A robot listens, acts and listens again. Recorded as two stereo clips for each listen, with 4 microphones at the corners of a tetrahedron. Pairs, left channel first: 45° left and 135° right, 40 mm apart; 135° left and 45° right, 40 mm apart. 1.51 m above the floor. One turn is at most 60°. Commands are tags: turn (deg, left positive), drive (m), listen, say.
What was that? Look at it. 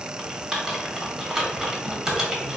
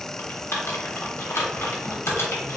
<turn deg="60"/>
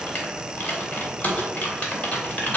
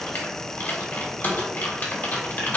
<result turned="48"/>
<turn deg="60"/>
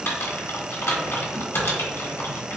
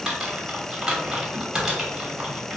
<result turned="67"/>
<turn deg="30"/>
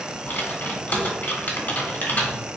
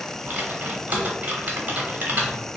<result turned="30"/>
<say>Facing the typing on a keyboard, 1 to 2 m away.</say>